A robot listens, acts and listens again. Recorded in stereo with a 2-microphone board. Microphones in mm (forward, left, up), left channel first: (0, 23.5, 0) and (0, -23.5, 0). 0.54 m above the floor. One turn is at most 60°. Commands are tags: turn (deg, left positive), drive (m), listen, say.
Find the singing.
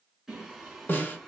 <turn deg="-30"/>
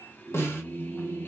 <turn deg="50"/>
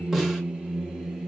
<turn deg="-10"/>
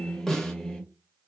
<turn deg="10"/>
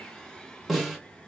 <turn deg="10"/>
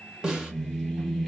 <say>Found it: singing, straight ahead, 1 to 2 m away.</say>